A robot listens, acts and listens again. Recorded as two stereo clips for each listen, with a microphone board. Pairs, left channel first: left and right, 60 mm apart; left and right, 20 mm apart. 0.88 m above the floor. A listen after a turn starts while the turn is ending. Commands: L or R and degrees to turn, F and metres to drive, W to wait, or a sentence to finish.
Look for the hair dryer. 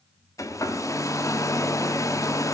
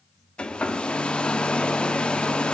L60
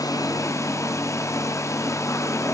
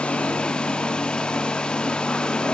L60
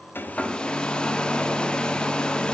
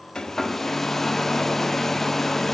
L15
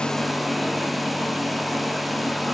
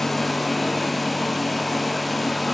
Facing the hair dryer, under 1 m away.